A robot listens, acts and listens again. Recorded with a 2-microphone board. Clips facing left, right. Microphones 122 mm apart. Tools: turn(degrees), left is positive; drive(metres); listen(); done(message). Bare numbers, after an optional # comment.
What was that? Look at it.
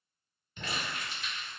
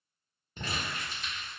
# The crumpling: about 40° right or 140° right.
turn(-40)
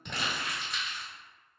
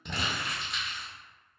done("Facing the crumpling.")